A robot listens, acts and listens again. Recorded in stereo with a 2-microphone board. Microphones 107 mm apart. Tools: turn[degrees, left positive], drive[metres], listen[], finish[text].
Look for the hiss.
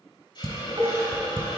Thought: The hiss: about 50° left or 130° left.
Action: turn[50]
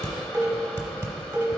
Action: listen[]
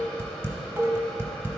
Action: listen[]
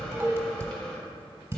Action: finish[I heard a hiss, but can't make it out now. It was about straight ahead or 80° left.]